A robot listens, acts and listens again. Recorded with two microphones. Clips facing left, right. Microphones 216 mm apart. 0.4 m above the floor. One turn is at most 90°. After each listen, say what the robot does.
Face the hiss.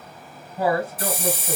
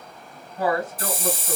Turn 65° left.
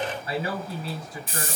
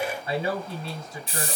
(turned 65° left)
Turn 50° left.
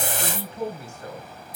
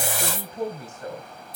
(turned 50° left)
Turn 20° left.
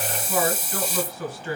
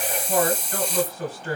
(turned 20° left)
Facing the hiss, 1 to 2 m away.